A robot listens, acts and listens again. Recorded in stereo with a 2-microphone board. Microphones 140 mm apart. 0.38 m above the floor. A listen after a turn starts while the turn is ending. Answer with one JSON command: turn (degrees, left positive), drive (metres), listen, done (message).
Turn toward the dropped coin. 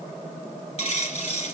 {"turn": 50}
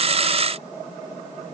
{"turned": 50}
{"listen": true}
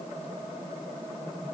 {"done": "I heard a dropped coin, but can't make it out now. It was about straight ahead or 80° left."}